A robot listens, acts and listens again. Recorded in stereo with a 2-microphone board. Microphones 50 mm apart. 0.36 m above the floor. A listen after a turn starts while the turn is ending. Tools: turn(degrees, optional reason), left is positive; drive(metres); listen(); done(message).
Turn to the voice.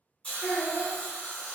turn(degrees=65, reason="The child speaking: about 65° left or 115° left.")
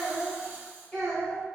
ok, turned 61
turn(degrees=15, reason="So it is at 15° left.")
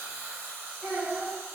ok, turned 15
done("Found it: a child speaking, straight ahead.")